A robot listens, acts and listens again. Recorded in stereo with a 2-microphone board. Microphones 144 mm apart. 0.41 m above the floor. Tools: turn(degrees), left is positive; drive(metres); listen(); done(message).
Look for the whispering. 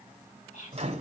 turn(degrees=55)
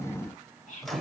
turn(degrees=65)
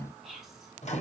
done("Found it: whispering, straight ahead.")